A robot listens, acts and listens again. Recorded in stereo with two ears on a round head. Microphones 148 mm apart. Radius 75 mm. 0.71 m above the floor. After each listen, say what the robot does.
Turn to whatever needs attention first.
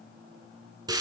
Keep listening.
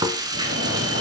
Turn 90° right.
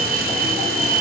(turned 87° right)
Facing the fire alarm, over 4 m away.